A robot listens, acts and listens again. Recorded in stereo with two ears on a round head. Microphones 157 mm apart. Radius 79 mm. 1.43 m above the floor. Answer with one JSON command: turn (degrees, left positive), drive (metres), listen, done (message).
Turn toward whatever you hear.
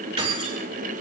{"turn": -35}
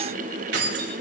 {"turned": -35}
{"turn": -110}
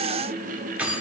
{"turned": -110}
{"turn": -10}
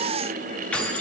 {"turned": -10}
{"turn": 10}
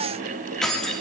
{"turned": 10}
{"done": "Facing the keys jangling, 1 to 2 m away."}